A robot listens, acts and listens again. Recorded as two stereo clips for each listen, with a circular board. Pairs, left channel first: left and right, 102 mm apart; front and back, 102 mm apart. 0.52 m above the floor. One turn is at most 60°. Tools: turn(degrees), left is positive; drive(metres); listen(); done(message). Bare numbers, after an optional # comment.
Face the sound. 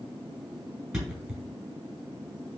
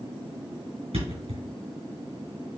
# The thud: 175° right.
turn(-60)
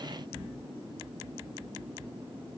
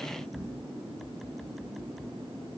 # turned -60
# Nothing new. It was at 115° right.
turn(-60)
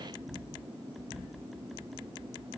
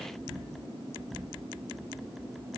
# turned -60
# Nothing new. It was at 55° right.
turn(-55)
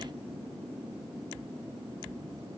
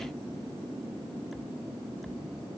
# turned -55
done("I heard a thud from this way, but can't make it out now.")